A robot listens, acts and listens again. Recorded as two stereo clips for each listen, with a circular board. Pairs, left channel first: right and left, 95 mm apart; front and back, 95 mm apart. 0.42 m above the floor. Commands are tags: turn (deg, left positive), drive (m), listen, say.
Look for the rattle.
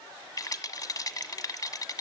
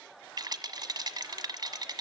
<turn deg="-140"/>
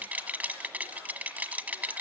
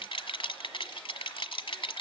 <turn deg="15"/>
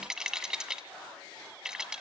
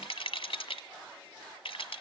<say>Facing the rattle.</say>